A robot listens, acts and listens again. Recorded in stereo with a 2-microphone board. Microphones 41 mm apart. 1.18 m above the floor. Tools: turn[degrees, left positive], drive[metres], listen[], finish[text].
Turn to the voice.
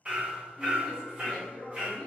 Action: turn[30]
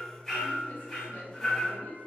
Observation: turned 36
Thought: So it is at 140° left.
Action: turn[140]
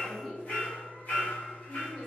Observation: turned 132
Action: finish[Facing the woman speaking, under 1 m away.]